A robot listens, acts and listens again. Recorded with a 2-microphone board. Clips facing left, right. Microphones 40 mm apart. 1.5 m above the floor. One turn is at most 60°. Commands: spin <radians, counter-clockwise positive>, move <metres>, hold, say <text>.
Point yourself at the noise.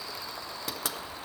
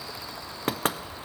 spin -0.87
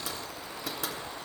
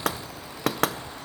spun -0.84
spin -1.05
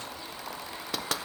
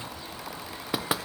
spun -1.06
spin -0.26
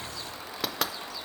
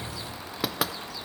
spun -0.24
say Found it: knocking, straight ahead, under 1 m away.